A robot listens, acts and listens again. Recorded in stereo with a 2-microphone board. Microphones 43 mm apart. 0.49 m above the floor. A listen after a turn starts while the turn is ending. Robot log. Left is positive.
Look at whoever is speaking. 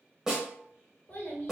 note: The child speaking: about 35° left or 145° left.
cmd yaw +35
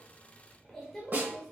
note: So it is at 10° left.
cmd yaw +10
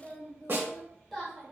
end: Found it: a child speaking, straight ahead, 1 to 2 m away.